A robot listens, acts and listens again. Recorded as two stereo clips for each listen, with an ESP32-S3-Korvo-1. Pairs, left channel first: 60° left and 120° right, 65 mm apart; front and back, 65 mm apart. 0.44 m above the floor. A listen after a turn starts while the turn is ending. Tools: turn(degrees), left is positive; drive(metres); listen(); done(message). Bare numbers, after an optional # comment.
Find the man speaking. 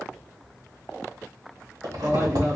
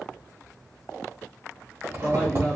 # The man speaking: 70° right.
turn(-70)
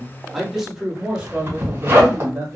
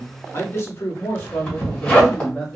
# The man speaking is now 80° right.
turn(-80)
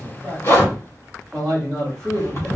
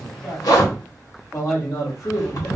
# The man speaking is now 15° right.
turn(-15)
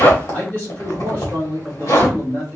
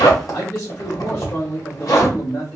done("Facing the man speaking.")